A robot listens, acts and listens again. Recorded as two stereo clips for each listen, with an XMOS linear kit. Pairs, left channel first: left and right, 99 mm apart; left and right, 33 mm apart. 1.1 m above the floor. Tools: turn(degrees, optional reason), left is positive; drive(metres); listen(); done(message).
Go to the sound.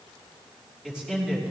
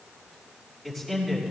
turn(degrees=-30)
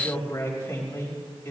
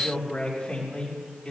turn(degrees=25, reason="So it is at 25° left.")
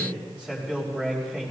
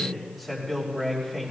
turn(degrees=-10, reason="The man speaking is now 10° right.")
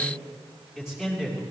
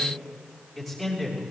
drive(metres=1.0)
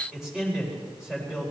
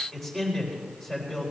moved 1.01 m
drive(metres=1.0)
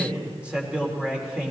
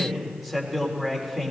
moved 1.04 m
turn(degrees=-10, reason="The man speaking is now 10° right.")
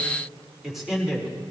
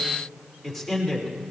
drive(metres=1.0)
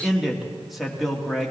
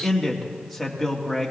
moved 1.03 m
drive(metres=1.0)
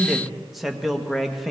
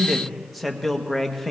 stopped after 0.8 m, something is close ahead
done("I am next to the man speaking.")